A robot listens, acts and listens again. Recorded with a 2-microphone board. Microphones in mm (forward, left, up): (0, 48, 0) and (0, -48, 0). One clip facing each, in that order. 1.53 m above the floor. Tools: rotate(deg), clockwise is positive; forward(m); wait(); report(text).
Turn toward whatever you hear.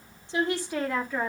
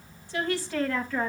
rotate(-30)
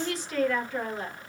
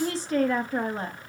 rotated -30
rotate(40)
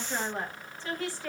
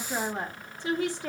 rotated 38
rotate(20)
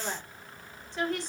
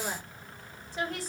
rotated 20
report("Facing the woman speaking.")